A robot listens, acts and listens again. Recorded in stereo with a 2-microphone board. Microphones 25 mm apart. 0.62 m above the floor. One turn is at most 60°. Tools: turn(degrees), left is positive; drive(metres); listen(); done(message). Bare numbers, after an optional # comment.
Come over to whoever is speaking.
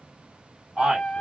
# The man speaking: about 60° right or 120° right.
turn(-60)
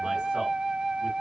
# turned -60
listen()
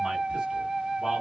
listen()
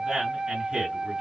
# So it is at 35° right.
turn(-35)
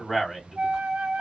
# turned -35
drive(1.0)
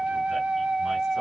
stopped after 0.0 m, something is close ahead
listen()
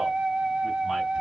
listen()
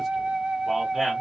done("I heard a man speaking from this way, but can't make it out now. I did not reach it.")